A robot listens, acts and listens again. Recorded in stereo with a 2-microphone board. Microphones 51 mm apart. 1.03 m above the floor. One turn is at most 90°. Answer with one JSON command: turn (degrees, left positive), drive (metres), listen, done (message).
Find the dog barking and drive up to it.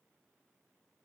{"listen": true}
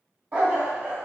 {"turn": -40}
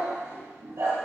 {"turn": -90}
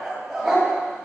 {"drive": 1.0}
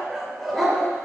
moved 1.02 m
{"drive": 1.0}
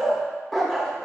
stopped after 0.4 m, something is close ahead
{"done": "Arrived at the dog barking, straight ahead."}